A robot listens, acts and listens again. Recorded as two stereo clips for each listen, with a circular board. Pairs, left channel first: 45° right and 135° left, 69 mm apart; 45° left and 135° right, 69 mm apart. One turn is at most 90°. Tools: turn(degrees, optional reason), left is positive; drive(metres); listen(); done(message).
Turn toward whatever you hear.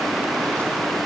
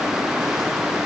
listen()
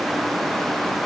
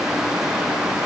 listen()
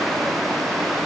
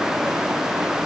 done("I can't make out anything.")